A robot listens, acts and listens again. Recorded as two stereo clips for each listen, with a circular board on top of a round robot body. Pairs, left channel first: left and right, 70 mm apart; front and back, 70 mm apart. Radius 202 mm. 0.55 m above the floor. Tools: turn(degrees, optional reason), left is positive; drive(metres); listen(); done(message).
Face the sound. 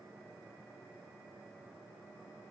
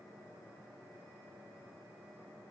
listen()
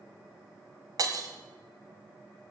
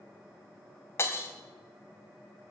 turn(degrees=-55, reason="The breaking glass: 55° right.")
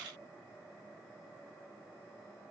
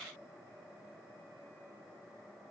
done("Facing where the breaking glass came from. I can't hear it now.")